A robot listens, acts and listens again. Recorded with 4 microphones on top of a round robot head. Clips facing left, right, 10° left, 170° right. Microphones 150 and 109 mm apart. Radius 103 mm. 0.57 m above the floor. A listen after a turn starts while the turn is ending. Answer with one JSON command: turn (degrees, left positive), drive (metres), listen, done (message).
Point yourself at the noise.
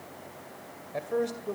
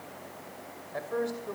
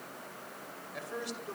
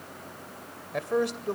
{"turn": 155}
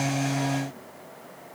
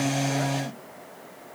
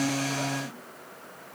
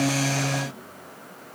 {"listen": true}
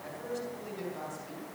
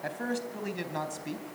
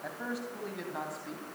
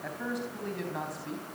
{"turn": -85}
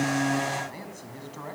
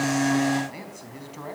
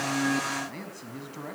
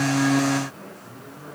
{"turn": -15}
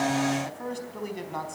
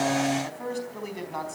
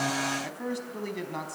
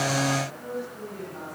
{"done": "Found it: a man speaking, straight ahead, over 4 m away."}